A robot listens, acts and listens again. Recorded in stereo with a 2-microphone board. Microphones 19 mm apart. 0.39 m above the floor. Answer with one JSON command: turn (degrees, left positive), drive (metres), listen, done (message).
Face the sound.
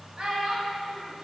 {"turn": -60}
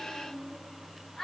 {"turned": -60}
{"done": "Facing the child speaking, 2 to 4 m away."}